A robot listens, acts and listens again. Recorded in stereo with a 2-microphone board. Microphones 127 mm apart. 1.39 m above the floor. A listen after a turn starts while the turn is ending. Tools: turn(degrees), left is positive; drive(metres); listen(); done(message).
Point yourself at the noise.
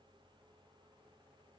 listen()
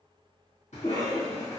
turn(degrees=90)
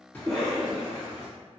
turn(degrees=-10)
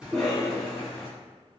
done("Found it: a cough, straight ahead, 1 to 2 m away.")